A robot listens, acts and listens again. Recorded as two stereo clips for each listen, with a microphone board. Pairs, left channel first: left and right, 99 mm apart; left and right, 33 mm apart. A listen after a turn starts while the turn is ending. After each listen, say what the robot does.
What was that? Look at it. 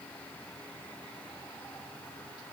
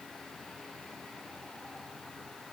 Keep listening.
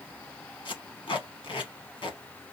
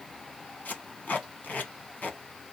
Turn 50° left.
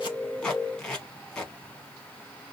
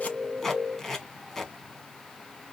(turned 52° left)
Facing the tape being pulled.